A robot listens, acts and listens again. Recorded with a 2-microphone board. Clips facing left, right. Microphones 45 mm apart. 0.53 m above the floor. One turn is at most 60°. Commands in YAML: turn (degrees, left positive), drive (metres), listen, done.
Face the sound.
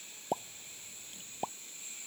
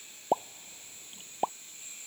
turn: -30
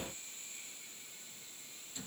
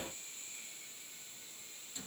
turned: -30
listen: true
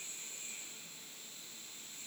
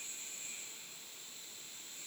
done: "I heard a pop, but can't make it out now. It was about straight ahead or 120° right."